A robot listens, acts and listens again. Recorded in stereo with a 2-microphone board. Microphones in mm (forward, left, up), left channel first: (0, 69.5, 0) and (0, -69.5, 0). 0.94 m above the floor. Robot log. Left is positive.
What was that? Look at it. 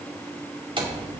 note: The door slam: about 40° right or 140° right.
cmd yaw -40
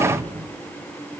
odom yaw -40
cmd idle
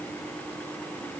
end: I heard a door slam, but can't make it out now. It was about straight ahead or 100° right.